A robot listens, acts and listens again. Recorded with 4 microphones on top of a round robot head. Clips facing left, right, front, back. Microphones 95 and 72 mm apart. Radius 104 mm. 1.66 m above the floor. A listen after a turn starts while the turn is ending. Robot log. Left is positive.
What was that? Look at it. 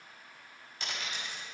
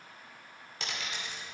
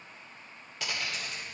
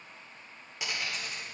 note: The dropped coin: 95° right.
cmd yaw -95
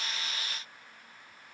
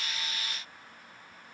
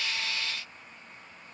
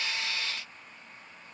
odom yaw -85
note: Nothing new. It was at 10° right.
cmd yaw -10
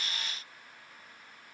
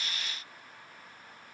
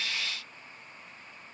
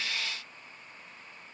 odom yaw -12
end: I heard a dropped coin from this way, but can't make it out now.